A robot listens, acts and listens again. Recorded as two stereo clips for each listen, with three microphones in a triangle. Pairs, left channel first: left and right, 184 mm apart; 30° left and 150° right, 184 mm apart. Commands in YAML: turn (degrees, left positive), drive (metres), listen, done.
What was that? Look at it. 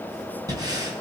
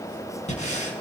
turn: -20
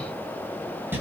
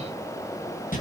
turn: -10
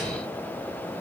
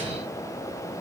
listen: true
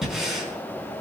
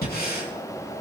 done: "Facing the breathing, over 4 m away."